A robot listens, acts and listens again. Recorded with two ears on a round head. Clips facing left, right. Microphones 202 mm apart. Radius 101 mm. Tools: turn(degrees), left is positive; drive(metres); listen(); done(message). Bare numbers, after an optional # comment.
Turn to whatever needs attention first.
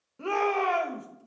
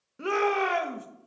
# The shout: about 20° right or 160° right.
turn(-20)
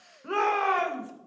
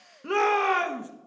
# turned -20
# So it is at 135° right.
turn(-135)
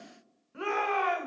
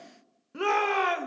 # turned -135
# The shout is now 60° right.
turn(-60)
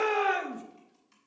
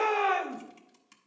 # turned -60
# The shout is now 10° left.
turn(10)
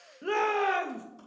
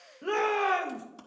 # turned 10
done("Facing the shout, 1 to 2 m away.")